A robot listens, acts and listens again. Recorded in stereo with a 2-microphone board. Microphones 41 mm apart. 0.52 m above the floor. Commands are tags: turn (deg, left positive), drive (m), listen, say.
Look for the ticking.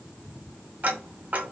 <turn deg="-45"/>
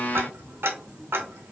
<turn deg="-90"/>
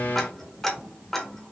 <turn deg="10"/>
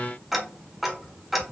<say>Found it: ticking, straight ahead, under 1 m away.</say>